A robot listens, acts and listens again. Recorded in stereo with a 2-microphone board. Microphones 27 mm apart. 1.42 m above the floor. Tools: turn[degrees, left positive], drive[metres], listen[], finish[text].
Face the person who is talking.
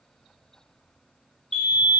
Action: listen[]
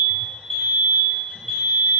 Action: listen[]
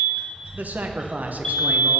Thought: The man speaking: about 75° right or 105° right.
Action: turn[-75]
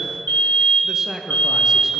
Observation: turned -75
Thought: So it is at 15° right.
Action: turn[-15]
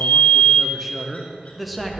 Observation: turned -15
Action: finish[Facing the man speaking, under 1 m away.]